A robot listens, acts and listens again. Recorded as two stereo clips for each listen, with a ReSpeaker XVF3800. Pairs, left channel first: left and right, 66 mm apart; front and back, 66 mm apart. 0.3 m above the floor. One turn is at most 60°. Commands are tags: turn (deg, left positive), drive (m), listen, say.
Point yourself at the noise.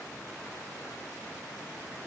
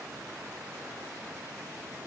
<listen/>
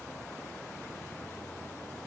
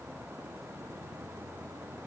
<listen/>
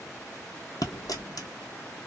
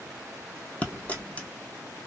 <turn deg="60"/>
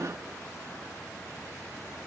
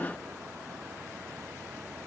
<turn deg="10"/>
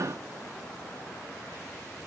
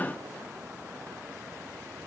<say>I heard a dropped coin from this way, but can't make it out now.</say>